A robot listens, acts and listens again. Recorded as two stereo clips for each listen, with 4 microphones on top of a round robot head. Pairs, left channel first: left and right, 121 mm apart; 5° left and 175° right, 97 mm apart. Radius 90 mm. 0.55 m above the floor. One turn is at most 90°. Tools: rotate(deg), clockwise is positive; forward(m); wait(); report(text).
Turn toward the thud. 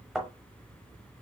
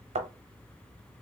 rotate(90)
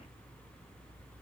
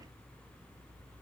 rotate(85)
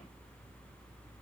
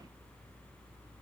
report("Facing where the thud came from. I can't hear it now.")